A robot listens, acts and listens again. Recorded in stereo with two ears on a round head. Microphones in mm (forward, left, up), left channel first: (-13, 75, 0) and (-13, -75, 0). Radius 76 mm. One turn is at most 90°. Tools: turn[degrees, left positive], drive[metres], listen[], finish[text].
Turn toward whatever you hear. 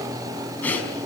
Action: turn[30]
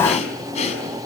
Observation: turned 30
Thought: So it is at 140° left.
Action: turn[90]
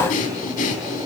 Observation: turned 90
Thought: The breathing is now 45° left.
Action: turn[45]
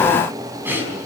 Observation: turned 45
Thought: The breathing is now 15° right.
Action: turn[-15]
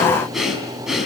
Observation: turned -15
Action: finish[Found it: breathing, straight ahead.]